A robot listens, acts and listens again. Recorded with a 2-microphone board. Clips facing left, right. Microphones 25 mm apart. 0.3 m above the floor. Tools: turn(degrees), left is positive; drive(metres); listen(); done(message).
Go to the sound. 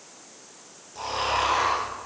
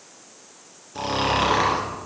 turn(degrees=-30)
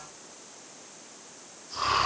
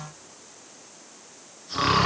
turn(degrees=-115)
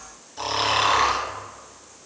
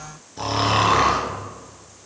turn(degrees=10)
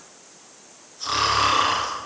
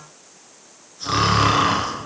drive(metres=1.0)
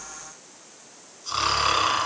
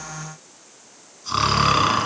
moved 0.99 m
turn(degrees=-15)
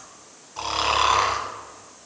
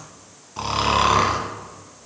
drive(metres=1.0)
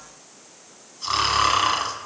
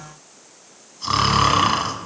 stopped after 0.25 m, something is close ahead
done("Arrived at the snoring, straight ahead.")